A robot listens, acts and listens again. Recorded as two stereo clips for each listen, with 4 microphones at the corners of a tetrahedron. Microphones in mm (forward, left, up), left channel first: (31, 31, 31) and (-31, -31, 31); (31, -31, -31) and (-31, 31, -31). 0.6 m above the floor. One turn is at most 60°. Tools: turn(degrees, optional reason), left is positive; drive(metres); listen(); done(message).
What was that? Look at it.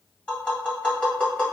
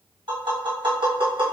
turn(degrees=60, reason="The tapping: 120° left.")
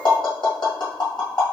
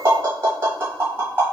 turn(degrees=60, reason="The tapping is now 70° left.")
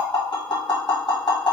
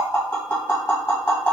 turn(degrees=15, reason="The tapping is now 15° left.")
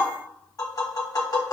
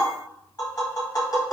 done("Facing the tapping.")